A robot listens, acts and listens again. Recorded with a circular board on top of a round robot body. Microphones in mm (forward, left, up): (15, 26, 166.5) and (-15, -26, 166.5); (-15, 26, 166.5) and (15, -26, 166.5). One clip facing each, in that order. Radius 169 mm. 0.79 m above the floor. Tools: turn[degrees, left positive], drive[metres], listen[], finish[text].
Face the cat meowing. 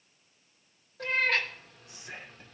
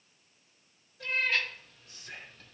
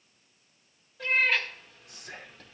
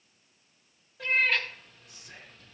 Thought: The cat meowing: 30° left.
Action: turn[30]
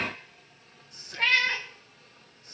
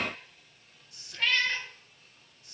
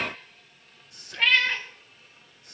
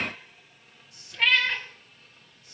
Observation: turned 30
Thought: The cat meowing is now 30° left.
Action: turn[30]
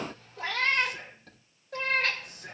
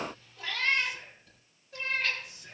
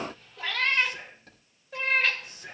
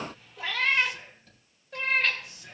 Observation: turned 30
Thought: The cat meowing is now 35° left.
Action: turn[35]
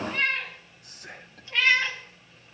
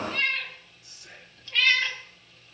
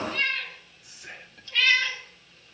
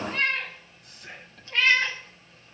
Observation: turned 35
Action: finish[Found it: a cat meowing, straight ahead, 2 to 4 m away.]